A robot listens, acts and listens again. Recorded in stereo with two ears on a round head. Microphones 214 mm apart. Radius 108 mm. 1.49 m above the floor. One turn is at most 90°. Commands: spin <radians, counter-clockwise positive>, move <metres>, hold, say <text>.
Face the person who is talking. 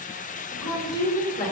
spin 0.52
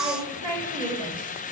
spin -0.35
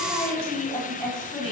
say Facing the woman speaking.